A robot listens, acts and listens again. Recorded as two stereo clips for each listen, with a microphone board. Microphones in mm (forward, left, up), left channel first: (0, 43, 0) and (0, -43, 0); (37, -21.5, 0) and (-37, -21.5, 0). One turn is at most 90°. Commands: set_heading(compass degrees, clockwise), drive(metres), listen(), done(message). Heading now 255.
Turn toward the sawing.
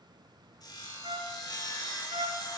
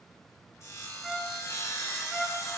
set_heading(210)
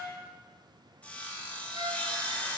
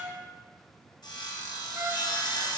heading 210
set_heading(195)
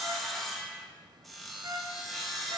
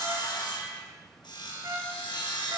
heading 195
done("Facing the sawing.")